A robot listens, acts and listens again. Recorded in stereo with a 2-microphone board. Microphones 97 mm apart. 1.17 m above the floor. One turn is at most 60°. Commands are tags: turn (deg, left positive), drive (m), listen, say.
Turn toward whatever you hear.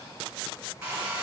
<turn deg="-20"/>
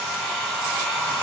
<say>Found it: a hair dryer, straight ahead.</say>